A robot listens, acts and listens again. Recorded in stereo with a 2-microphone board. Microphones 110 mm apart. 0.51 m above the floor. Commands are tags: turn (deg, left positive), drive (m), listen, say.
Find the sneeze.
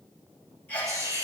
<turn deg="20"/>
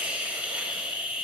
<listen/>
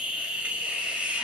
<say>I heard a sneeze, but can't make it out now. It was about straight ahead or 140° left.</say>